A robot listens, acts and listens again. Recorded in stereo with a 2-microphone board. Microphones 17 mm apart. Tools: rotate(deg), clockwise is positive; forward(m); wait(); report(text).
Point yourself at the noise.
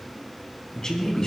rotate(-35)
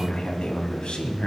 rotate(-115)
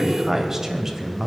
rotate(20)
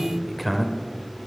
report("Facing the man speaking, 1 to 2 m away.")